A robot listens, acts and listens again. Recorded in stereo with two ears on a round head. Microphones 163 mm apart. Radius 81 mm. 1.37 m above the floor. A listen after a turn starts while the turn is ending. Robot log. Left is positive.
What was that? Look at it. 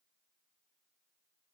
cmd idle
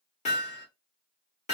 note: The hammering: about 40° left or 140° left.
cmd yaw +40
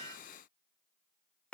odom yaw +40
end: Found it: hammering, straight ahead.